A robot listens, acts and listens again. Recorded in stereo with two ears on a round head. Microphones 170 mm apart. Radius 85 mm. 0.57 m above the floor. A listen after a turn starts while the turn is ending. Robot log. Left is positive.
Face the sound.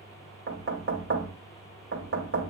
note: The knocking: about 70° right or 110° right.
cmd yaw -70
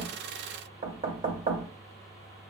note: So it is at 30° right.
cmd yaw -30
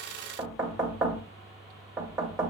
end: Found it: knocking, straight ahead.